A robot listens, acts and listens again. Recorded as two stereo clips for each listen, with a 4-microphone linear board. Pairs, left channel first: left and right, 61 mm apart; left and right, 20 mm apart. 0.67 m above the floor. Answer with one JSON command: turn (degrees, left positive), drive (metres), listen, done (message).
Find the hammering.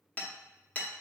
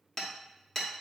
{"turn": 25}
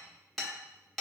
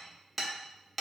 {"done": "Found it: hammering, straight ahead, under 1 m away."}